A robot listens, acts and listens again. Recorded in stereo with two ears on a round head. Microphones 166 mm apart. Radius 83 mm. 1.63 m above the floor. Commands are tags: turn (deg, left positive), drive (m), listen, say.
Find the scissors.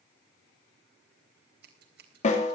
<turn deg="-60"/>
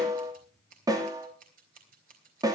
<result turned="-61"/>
<turn deg="-50"/>
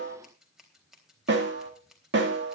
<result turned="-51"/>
<say>Found it: scissors, straight ahead, 2 to 4 m away.</say>